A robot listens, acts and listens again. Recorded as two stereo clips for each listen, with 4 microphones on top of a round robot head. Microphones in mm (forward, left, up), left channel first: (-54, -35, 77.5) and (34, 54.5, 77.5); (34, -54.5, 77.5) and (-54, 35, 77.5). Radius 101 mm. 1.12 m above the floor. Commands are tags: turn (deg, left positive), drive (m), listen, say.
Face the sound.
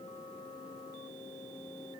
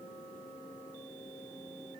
<listen/>
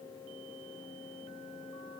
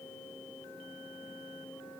<listen/>
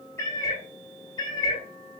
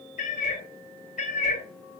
<turn deg="-75"/>
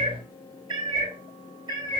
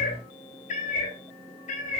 <turn deg="-15"/>
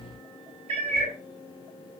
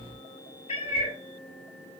<say>Facing the cat meowing, 2 to 4 m away.</say>